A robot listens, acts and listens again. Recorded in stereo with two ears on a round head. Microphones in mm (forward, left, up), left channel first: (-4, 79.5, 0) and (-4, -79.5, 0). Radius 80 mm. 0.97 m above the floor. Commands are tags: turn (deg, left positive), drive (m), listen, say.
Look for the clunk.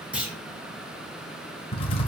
<turn deg="-30"/>
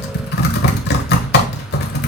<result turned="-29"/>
<listen/>
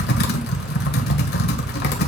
<say>I heard a clunk, but can't make it out now. It was about 20° left or 145° right.</say>